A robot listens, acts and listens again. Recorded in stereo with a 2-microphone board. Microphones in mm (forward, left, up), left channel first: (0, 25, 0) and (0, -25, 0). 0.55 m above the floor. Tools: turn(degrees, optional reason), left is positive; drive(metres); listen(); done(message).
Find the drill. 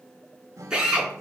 turn(degrees=-30)
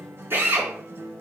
turn(degrees=-135, reason="So it is at 135° right.")
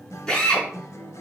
turn(degrees=15, reason="The drill is now 15° left.")
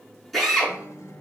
done("Found it: a drill, straight ahead.")